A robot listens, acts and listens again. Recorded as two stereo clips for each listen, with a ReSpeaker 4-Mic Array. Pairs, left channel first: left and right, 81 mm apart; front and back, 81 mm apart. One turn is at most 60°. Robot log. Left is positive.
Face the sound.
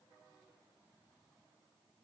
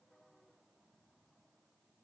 cmd idle
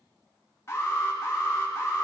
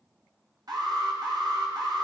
note: The alarm: 145° left.
cmd yaw +60
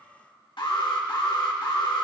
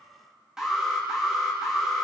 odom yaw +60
note: The alarm is now 95° left.
cmd yaw +60
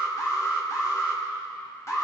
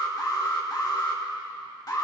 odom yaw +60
note: The alarm is now 40° left.
cmd yaw +40
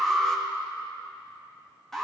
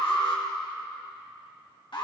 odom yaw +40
end: Facing the alarm.